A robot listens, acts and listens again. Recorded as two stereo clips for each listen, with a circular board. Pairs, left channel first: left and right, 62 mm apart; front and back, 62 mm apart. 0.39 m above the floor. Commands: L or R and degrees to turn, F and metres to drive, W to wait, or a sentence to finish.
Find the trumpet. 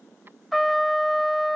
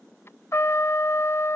Facing the trumpet.